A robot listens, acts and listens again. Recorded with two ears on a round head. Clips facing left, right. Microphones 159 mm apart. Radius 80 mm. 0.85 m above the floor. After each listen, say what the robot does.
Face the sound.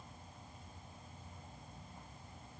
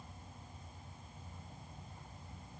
Keep listening.
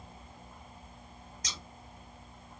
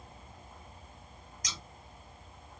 Turn 25° left.
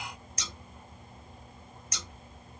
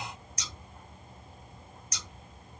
Turn 125° left.
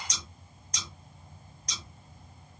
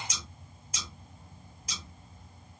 Found it: scissors, straight ahead.